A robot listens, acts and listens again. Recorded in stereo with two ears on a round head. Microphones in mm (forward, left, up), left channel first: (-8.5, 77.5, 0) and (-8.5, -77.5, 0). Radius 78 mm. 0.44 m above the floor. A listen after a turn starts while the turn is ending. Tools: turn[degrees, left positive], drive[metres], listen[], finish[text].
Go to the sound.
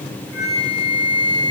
Thought: The flute: about 70° left or 110° left.
Action: turn[70]
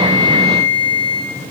Action: drive[1.0]
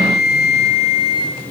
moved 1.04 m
Action: drive[1.0]
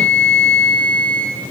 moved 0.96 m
Action: drive[1.0]
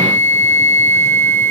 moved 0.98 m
Thought: The flute is now 15° left.
Action: turn[15]
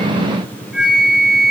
Action: drive[1.0]
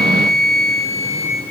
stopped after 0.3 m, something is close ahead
Action: finish[I am next to the flute.]